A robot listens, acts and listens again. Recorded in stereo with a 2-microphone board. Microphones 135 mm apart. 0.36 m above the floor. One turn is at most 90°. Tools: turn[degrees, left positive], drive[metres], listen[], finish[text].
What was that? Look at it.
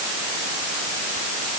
Action: listen[]
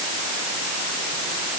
Action: listen[]
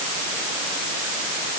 Action: finish[I can't make out anything.]